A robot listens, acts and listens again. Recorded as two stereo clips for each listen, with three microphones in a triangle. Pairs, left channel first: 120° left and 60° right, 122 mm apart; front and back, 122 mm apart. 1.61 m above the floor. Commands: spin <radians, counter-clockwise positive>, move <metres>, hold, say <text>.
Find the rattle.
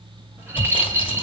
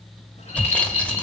spin 0.17
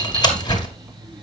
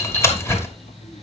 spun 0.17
hold
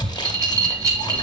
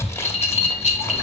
say Found it: a rattle, straight ahead.